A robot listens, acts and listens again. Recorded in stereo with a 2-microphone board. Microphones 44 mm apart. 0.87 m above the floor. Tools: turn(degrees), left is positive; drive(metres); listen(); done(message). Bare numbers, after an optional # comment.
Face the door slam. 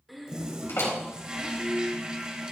# The door slam: about 75° left or 105° left.
turn(75)
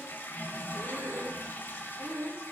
listen()
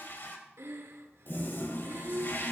done("I heard a door slam, but can't make it out now. It was about straight ahead or 30° left.")